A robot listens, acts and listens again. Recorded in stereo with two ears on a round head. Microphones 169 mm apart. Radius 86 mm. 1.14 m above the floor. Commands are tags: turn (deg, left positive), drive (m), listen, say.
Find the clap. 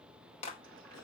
<turn deg="35"/>
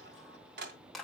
<say>Found it: a clap, straight ahead, 2 to 4 m away.</say>